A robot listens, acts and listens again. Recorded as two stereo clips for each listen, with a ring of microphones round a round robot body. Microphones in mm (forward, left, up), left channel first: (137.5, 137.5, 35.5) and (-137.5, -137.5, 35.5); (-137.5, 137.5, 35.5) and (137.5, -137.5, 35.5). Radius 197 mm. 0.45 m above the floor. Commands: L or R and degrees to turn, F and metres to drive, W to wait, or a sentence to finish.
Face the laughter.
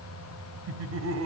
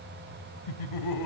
L170
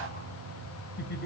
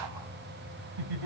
R20
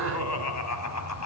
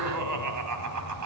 Facing the laughter, 2 to 4 m away.